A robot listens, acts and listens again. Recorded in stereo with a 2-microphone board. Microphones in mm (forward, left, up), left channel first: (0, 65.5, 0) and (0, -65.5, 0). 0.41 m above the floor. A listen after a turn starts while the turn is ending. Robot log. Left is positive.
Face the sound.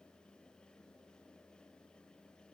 cmd idle
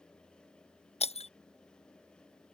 note: The breaking glass: about 55° left or 125° left.
cmd yaw +55
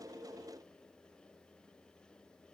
cmd idle
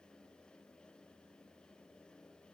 end: I heard breaking glass, but can't make it out now. It was about straight ahead or 70° left.